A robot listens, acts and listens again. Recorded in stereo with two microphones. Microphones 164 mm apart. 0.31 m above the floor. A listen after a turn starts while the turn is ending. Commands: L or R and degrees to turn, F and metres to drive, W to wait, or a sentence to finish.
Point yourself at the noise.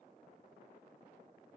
W
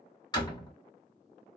L25
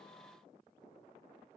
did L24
W
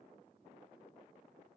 I heard a door slam, but can't make it out now. It was about straight ahead or 130° left.